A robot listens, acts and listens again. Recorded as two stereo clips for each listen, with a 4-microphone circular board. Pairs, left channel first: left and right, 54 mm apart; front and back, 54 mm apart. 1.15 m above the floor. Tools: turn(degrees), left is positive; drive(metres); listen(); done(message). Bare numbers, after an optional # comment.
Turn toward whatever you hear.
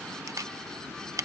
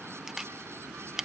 # The camera shutter: 100° right.
turn(-100)
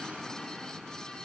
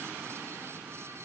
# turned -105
listen()
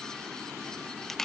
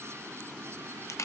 done("Found it: a camera shutter, straight ahead.")